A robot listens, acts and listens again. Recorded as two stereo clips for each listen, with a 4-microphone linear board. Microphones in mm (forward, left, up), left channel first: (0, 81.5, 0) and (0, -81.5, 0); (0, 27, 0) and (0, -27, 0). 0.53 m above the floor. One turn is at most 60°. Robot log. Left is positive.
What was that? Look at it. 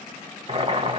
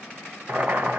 note: The boiling: about 35° right or 145° right.
cmd yaw -35
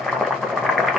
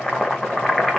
end: Found it: boiling, straight ahead.